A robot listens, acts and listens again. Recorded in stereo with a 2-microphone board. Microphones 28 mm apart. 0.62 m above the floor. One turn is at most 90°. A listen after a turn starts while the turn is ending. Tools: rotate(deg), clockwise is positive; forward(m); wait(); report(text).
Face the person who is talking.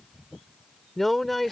rotate(-30)
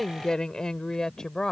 rotate(-90)
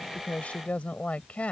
rotate(-55)
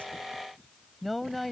report("Found it: a woman speaking, straight ahead.")